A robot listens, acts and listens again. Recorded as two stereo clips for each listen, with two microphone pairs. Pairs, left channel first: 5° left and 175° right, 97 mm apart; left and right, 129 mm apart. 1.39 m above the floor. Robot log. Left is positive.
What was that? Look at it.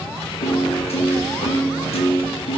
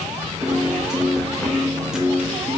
end: Facing the piano.